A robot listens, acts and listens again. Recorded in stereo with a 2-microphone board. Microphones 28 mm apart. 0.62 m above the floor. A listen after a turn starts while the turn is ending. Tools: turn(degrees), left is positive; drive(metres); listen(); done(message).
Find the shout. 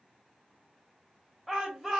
turn(degrees=30)
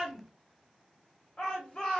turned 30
turn(degrees=150)
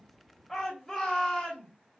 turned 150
turn(degrees=10)
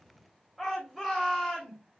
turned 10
done("Facing the shout.")